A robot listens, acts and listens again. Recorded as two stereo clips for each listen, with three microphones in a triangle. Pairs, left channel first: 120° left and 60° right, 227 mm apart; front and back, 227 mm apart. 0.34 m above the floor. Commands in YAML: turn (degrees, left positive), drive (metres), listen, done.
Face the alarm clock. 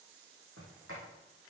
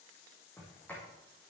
listen: true
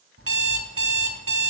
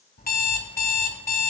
turn: -50
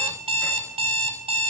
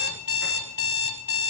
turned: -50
done: "Found it: an alarm clock, straight ahead, 1 to 2 m away."